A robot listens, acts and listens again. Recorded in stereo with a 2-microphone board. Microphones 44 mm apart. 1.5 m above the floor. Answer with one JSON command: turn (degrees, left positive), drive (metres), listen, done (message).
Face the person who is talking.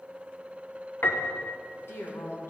{"turn": 65}
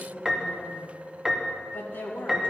{"turn": 50}
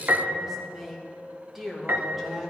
{"done": "Found it: a woman speaking, straight ahead, 2 to 4 m away."}